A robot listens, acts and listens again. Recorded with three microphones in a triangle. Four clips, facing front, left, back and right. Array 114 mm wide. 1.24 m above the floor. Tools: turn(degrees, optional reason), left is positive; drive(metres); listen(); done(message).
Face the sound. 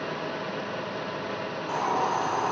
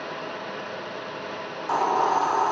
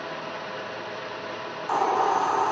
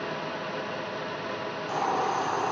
turn(degrees=125, reason="The hiss: 125° left.")
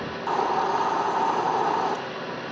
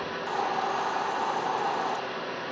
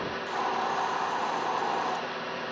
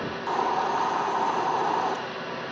turn(degrees=-30, reason="The hiss is now 30° right.")
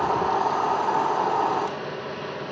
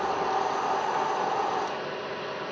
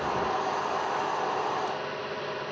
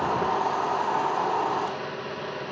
turn(degrees=-15, reason="The hiss is now 15° right.")
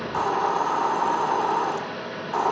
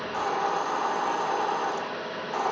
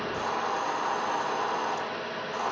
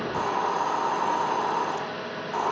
done("Facing the hiss, 1 to 2 m away.")